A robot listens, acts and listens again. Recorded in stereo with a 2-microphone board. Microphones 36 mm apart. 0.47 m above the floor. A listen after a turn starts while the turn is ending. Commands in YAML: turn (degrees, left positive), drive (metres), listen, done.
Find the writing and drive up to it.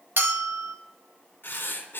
turn: 90
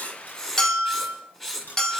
turn: 10
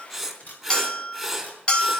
drive: 1.0
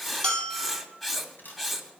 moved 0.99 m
drive: 1.0
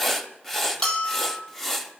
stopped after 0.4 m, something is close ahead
turn: 10
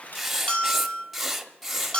done: "Arrived at the writing, straight ahead."